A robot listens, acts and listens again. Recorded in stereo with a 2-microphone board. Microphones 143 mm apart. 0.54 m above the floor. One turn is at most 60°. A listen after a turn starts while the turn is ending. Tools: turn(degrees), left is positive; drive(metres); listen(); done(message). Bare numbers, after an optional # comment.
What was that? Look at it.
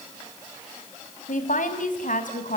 # The woman speaking: about 65° left or 115° left.
turn(60)
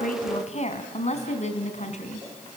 # So it is at 55° left.
turn(55)
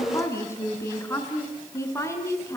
# The woman speaking is now 20° left.
turn(20)
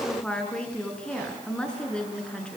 done("Found it: a woman speaking, straight ahead.")